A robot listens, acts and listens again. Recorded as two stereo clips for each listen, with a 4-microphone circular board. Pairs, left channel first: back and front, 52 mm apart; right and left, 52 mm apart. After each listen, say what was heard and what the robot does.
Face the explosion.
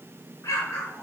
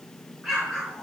The explosion: 165° left. Turn 165° left.
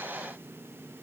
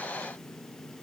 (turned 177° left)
Nothing new. It was at 10° right. Turn 10° right.
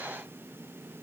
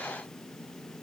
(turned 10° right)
I heard an explosion from this way, but can't make it out now.